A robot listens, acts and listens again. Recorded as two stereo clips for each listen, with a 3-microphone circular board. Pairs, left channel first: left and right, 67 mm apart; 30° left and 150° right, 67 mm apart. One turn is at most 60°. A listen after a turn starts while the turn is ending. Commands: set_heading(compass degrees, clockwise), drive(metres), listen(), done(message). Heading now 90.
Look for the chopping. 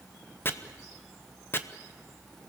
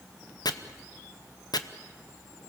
set_heading(55)
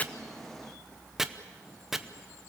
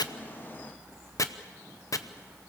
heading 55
done("Found it: chopping, straight ahead, under 1 m away.")